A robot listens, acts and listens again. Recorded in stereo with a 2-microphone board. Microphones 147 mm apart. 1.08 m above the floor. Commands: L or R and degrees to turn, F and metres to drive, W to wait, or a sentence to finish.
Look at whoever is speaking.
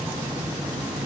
W
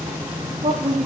R50
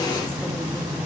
W
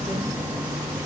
W
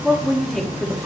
Facing the woman speaking.